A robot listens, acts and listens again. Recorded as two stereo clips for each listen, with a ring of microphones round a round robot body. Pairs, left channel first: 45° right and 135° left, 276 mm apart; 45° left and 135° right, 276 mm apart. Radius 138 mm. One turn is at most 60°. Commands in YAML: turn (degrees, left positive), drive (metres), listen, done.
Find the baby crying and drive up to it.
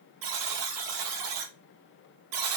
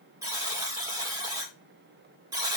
listen: true
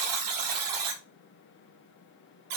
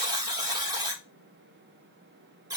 listen: true
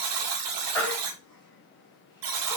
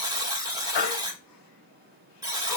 turn: 35
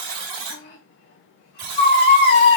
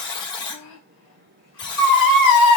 turn: 10
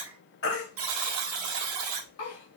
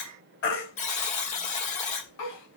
drive: 1.0
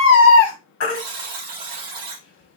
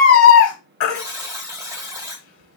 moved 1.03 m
drive: 1.0
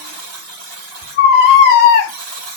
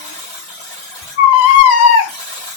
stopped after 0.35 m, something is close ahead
turn: 10
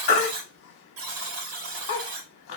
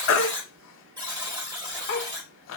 done: "I am next to the baby crying."